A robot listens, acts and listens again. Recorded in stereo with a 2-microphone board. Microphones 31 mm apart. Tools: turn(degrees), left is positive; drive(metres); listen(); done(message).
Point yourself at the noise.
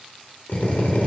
turn(degrees=65)
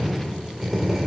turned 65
done("Found it: a drill, straight ahead.")